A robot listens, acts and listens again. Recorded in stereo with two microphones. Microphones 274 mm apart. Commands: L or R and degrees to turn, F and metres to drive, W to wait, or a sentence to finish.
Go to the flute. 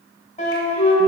L25
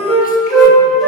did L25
F1.0
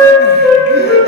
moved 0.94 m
F1.0
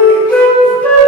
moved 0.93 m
F1.0
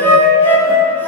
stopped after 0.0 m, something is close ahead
L10
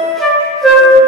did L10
I am next to the flute.